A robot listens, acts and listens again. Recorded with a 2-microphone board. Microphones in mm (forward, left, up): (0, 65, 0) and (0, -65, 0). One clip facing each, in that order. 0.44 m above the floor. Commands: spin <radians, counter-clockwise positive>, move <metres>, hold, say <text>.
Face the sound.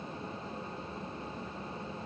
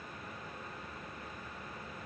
hold
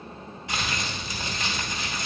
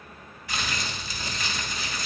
spin 0.44
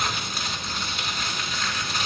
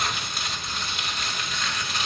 say Facing the crumpling.